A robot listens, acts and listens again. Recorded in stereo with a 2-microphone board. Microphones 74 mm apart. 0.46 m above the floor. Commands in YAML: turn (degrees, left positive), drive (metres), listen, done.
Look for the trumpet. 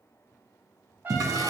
turn: -30
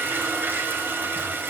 listen: true
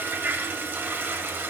listen: true
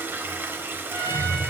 turn: -120
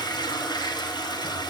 listen: true
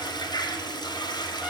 listen: true
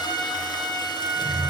done: "Found it: a trumpet, straight ahead."